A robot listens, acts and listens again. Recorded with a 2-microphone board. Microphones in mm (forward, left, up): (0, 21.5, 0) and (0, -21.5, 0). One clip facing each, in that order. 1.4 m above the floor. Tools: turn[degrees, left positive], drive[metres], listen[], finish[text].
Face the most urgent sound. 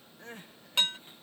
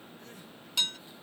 Thought: The crying: about 40° left or 140° left.
Action: turn[40]
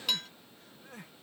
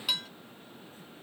Thought: So it is at 95° left.
Action: turn[95]
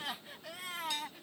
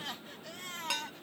Thought: The crying is now 10° left.
Action: turn[10]
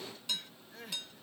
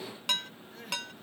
Action: finish[Found it: crying, straight ahead.]